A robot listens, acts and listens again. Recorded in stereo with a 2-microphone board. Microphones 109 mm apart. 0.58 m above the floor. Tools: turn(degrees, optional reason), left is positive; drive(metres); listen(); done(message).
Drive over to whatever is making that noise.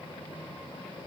listen()
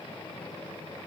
listen()
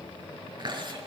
turn(degrees=-45, reason="The chewing: about 45° right or 135° right.")
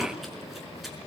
listen()
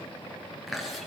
drive(metres=1.0)
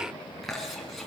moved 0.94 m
drive(metres=1.0)
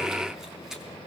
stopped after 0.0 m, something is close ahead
listen()
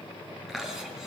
done("Something is in my way. I am facing the chewing but have not reached it.")